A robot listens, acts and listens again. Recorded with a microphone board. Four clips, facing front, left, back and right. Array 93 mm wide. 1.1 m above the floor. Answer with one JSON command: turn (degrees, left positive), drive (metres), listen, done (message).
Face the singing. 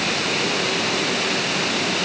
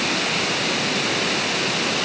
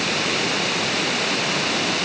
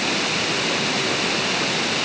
{"listen": true}
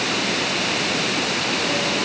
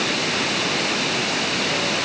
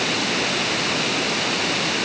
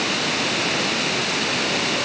{"listen": true}
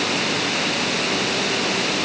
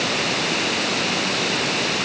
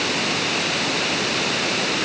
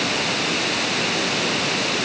{"done": "I can't make out singing."}